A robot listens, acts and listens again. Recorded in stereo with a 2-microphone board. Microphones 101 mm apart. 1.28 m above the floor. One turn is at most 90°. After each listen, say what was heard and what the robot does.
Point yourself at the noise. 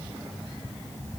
Keep listening.
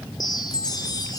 The chime: about 40° left or 140° left. Turn 40° left.
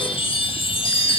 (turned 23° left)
So it is at 120° left. Turn 90° left.
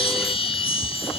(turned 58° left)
The chime is now 65° left. Turn 65° left.
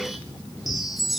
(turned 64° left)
Found it: a chime, straight ahead, 1 to 2 m away.